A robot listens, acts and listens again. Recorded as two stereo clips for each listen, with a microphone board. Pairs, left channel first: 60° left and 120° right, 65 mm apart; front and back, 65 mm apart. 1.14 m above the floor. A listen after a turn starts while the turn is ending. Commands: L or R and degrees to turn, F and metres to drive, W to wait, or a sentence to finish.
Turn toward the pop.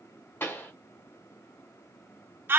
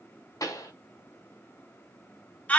L10
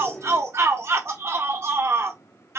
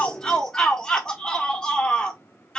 I heard a pop from this way, but can't make it out now.